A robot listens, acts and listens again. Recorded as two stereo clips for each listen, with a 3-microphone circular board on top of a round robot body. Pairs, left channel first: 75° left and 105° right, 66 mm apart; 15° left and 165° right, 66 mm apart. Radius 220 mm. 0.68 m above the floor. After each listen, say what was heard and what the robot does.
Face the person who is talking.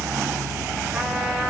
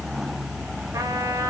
Keep listening.
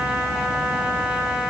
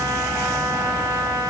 Keep listening.
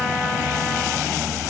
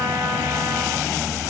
I can't make out anyone speaking.